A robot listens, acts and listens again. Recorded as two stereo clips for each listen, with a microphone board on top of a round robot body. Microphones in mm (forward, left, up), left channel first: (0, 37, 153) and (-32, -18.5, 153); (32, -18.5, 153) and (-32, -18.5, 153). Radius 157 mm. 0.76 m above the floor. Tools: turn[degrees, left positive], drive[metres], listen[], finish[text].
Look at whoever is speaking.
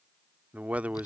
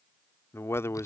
Thought: The man speaking: 50° right.
Action: turn[-50]
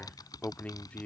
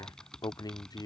Thought: The man speaking is now 10° right.
Action: turn[-10]
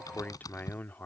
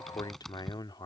Action: finish[Found it: a man speaking, straight ahead.]